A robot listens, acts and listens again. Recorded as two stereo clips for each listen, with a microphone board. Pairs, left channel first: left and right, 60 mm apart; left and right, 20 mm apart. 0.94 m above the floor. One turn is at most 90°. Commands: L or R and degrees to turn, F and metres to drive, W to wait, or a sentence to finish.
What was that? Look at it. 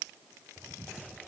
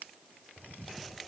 W
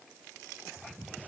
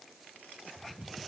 W
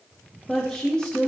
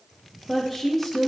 L15
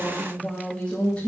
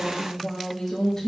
L20
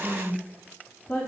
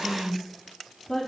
L15
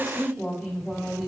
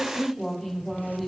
L30
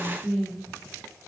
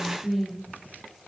R20
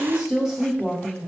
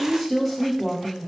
Facing the woman speaking.